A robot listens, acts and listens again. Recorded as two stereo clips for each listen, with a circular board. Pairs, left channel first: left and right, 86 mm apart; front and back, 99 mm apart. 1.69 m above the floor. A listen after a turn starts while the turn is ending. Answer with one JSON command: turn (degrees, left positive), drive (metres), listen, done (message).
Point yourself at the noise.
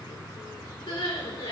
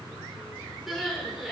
{"turn": 95}
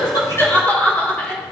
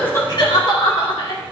{"turn": 20}
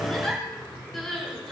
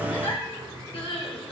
{"done": "Found it: crying, straight ahead."}